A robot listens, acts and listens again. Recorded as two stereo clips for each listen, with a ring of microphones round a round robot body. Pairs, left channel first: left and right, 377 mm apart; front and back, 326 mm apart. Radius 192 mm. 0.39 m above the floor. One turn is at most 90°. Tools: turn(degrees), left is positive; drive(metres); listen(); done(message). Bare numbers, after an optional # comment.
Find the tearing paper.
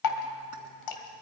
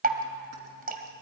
listen()
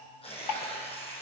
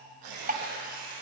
# The tearing paper: 165° left.
turn(90)
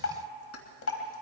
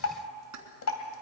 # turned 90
# Nothing new. It was at 75° left.
turn(75)
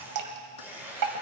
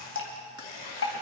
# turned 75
done("Facing the tearing paper.")